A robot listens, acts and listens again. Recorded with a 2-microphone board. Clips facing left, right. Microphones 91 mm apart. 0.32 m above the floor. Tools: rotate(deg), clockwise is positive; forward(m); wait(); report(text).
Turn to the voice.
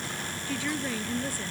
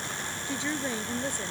rotate(20)
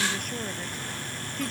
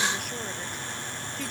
rotate(-30)
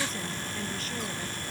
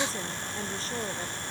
wait()
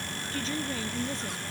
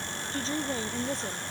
rotate(30)
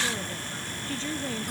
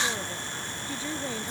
rotate(10)
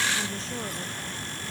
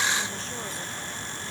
wait()
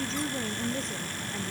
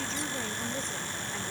report("Facing the woman speaking.")